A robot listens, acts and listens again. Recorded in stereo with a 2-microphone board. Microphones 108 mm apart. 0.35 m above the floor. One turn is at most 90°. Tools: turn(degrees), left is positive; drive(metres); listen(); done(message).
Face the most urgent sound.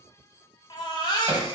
turn(degrees=45)
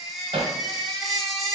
done("Facing the baby crying, under 1 m away.")